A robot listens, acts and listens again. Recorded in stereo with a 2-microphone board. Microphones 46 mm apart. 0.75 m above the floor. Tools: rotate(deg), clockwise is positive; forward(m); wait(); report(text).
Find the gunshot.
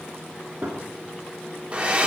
rotate(55)
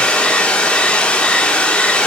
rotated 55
wait()
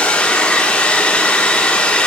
report("I heard a gunshot, but can't make it out now. It was about straight ahead or 70° right.")